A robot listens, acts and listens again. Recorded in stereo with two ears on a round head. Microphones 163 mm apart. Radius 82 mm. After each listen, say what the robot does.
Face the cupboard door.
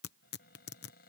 Turn 50° left.
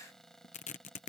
Found it: a cupboard door, straight ahead.